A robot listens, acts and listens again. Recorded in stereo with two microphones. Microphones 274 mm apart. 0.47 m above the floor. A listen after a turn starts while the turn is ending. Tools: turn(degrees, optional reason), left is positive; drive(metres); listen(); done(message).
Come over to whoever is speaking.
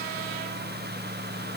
listen()
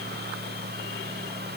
listen()
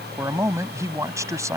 turn(degrees=-30)
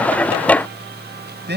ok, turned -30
turn(degrees=-140, reason="So it is at 140° right.")
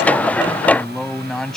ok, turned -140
drive(metres=1.0)
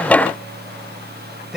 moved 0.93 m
drive(metres=1.0)
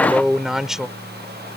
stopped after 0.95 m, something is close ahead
done("Arrived at the man speaking, straight ahead.")